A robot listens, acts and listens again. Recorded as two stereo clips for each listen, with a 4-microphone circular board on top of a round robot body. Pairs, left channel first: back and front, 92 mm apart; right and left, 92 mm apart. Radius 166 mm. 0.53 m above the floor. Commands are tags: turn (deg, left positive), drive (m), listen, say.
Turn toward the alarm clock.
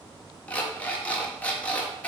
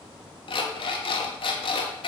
<turn deg="-105"/>
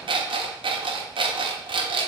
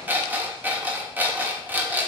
<turn deg="20"/>
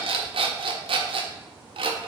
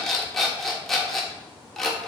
<say>Facing the alarm clock.</say>